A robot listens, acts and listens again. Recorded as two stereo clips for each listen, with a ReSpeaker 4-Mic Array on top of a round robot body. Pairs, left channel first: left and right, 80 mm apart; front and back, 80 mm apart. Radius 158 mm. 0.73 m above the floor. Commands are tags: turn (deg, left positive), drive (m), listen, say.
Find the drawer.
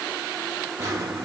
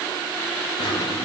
<turn deg="-35"/>
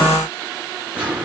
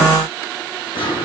<turn deg="-15"/>
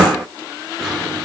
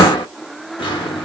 <say>Found it: a drawer, straight ahead, 1 to 2 m away.</say>